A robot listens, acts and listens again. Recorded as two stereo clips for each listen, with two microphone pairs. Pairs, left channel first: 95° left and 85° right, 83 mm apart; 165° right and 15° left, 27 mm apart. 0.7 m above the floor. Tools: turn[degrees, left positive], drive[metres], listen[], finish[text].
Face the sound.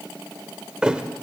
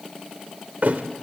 Action: finish[Facing the thud, 1 to 2 m away.]